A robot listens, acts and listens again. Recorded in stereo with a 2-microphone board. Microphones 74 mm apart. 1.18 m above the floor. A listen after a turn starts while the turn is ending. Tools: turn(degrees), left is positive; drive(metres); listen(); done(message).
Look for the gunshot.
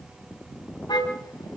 listen()
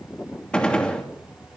turn(degrees=30)
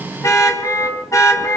listen()
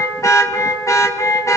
done("I heard a gunshot, but can't make it out now. It was about 15° right or 135° left.")